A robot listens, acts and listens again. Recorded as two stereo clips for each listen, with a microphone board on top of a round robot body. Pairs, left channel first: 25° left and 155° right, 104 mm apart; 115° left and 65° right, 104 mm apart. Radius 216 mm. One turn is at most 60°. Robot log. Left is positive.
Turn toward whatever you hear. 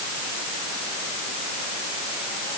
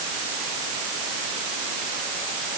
cmd idle
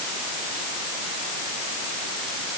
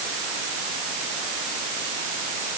cmd idle
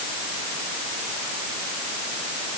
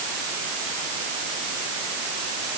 end: I can't make out anything to turn to.